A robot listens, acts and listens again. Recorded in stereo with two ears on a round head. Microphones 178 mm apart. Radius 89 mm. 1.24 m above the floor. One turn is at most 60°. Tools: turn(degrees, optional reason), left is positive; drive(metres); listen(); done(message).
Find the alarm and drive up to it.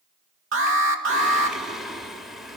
turn(degrees=-60, reason="The alarm: about 75° right or 105° right.")
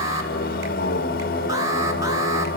listen()
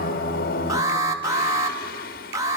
turn(degrees=-15, reason="So it is at 15° right.")
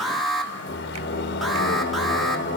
drive(metres=1.0)
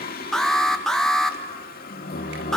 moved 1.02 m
drive(metres=1.0)
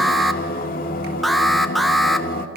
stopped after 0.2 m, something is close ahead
done("Arrived at the alarm, straight ahead.")